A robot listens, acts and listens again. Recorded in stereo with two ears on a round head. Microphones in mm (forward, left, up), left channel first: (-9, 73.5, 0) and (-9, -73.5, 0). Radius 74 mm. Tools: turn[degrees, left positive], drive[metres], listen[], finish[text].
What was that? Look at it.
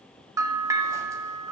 Thought: The bell: about 20° right or 160° right.
Action: turn[-20]
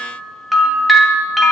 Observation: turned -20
Action: finish[Found it: a bell, straight ahead, 1 to 2 m away.]